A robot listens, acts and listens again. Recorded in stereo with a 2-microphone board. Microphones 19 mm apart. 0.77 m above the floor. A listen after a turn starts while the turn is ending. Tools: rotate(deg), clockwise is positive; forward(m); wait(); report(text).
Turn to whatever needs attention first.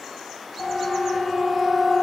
rotate(-35)
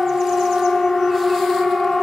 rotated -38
rotate(-110)
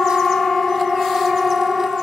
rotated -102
report("Facing the siren, over 4 m away.")